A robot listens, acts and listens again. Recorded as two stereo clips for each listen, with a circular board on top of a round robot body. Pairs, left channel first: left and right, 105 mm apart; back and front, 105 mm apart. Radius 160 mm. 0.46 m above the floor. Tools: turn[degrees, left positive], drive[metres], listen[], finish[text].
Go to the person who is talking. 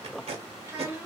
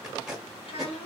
Thought: The child speaking: 165° right.
Action: turn[-165]
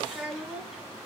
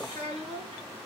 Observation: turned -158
Action: drive[1.0]
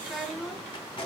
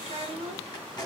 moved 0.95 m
Action: drive[1.0]
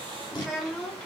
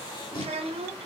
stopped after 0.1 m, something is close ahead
Action: finish[I am next to the child speaking.]